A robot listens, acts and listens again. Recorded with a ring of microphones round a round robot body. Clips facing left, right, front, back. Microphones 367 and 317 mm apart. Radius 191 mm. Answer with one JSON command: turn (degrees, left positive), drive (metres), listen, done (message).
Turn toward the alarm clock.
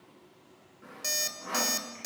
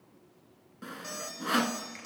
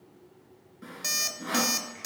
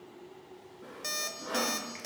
{"turn": 60}
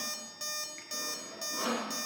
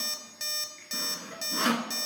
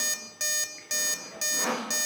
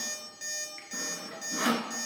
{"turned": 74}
{"turn": -15}
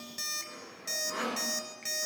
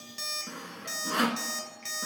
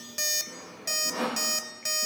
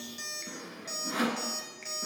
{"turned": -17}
{"done": "Facing the alarm clock."}